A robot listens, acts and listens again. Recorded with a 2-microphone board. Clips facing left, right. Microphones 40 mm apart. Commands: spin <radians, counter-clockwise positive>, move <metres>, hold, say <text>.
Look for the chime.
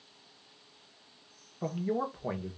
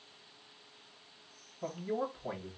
hold
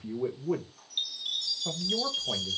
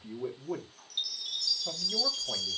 spin 0.61
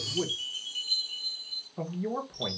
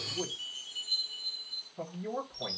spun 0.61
spin 1.92
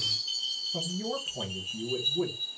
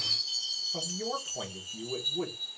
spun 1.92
spin 0.52
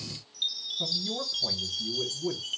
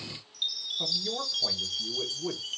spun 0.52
say Found it: a chime, straight ahead.